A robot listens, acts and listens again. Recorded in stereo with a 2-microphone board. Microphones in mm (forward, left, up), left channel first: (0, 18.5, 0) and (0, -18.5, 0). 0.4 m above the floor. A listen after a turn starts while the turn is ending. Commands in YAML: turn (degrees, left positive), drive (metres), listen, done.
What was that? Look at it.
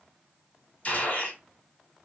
turn: 35
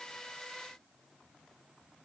listen: true
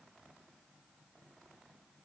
done: "I heard a gunshot, but can't make it out now. It was about straight ahead or 110° left."